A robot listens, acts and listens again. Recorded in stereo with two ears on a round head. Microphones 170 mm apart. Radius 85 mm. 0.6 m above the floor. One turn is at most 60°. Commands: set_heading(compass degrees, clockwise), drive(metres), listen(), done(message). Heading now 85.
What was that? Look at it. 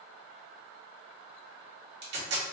set_heading(145)
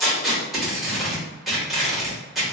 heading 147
done("Found it: tape being pulled, straight ahead, 1 to 2 m away.")